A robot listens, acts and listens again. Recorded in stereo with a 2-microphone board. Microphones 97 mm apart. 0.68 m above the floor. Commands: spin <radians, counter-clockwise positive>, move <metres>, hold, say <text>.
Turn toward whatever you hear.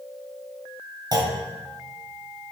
spin -0.79
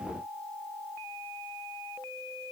hold
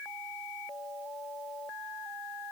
say I heard a clunk, but can't make it out now. It was about straight ahead or 90° right.